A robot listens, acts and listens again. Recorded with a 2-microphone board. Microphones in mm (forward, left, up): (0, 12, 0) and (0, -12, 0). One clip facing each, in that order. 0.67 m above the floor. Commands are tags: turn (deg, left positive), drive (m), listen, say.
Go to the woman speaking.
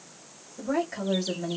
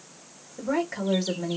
<turn deg="-25"/>
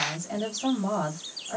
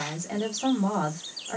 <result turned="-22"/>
<turn deg="-130"/>
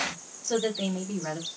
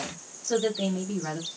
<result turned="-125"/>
<turn deg="-10"/>
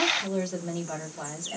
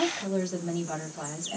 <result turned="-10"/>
<drive m="1.0"/>
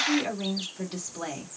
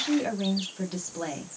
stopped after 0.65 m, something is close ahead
<say>I am next to the woman speaking.</say>